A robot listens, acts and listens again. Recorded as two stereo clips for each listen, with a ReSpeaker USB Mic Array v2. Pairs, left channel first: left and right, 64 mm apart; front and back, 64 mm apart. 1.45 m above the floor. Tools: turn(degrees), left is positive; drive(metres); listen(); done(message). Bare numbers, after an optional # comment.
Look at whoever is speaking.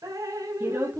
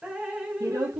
# The woman speaking: 150° right.
turn(-150)
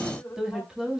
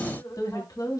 done("Found it: a woman speaking, straight ahead.")